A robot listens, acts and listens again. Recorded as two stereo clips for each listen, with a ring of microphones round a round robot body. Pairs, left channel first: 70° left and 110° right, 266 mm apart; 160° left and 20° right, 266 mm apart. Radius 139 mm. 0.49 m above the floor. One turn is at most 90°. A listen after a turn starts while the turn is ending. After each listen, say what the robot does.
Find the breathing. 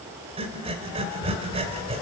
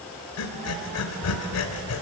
Turn 90° left.
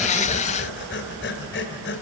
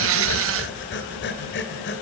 Turn 90° left.
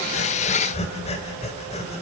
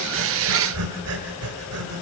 Found it: breathing, straight ahead, 2 to 4 m away.